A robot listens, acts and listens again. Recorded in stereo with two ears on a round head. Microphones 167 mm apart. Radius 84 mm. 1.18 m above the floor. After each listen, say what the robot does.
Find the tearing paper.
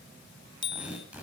Turn 30° right.
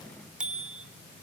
Keep listening.
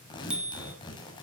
Turn 25° left.
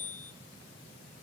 Keep listening.
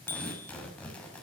Facing the tearing paper, over 4 m away.